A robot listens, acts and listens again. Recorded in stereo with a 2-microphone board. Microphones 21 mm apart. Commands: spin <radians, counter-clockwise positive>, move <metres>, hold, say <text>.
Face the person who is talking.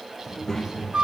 spin 0.35
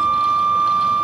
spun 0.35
hold
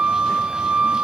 hold
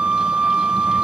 say I heard a child speaking, but can't make it out now. It was about straight ahead or 140° left.